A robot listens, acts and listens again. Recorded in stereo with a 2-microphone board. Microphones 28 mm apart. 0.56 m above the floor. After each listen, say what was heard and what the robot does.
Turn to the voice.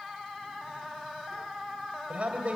The man speaking: about 50° right or 130° right. Turn 50° right.
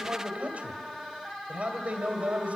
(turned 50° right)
So it is at 75° right. Turn 75° right.
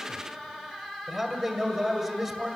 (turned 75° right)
The man speaking is now 25° right. Turn 25° right.
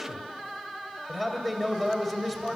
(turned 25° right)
The man speaking is now 10° right. Turn 10° right.
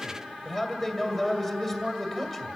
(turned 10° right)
Facing the man speaking, 2 to 4 m away.